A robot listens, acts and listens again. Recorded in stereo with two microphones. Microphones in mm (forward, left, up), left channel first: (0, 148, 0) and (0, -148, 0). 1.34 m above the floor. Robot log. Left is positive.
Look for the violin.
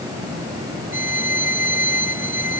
note: The violin: about 30° left or 150° left.
cmd yaw +30
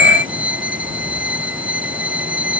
end: Facing the violin.